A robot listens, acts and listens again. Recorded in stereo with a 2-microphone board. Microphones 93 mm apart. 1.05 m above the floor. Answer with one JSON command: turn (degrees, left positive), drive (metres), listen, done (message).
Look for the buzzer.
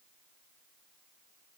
{"listen": true}
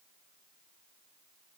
{"listen": true}
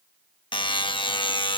{"turn": 60}
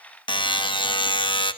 {"turn": 60}
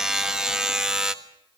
{"turn": -10}
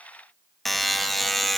{"done": "Facing the buzzer, 1 to 2 m away."}